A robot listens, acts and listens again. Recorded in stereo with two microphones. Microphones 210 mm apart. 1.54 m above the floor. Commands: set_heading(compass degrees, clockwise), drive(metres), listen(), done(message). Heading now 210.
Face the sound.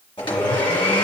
set_heading(185)
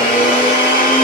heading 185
set_heading(55)
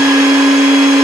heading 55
done("Facing the blender.")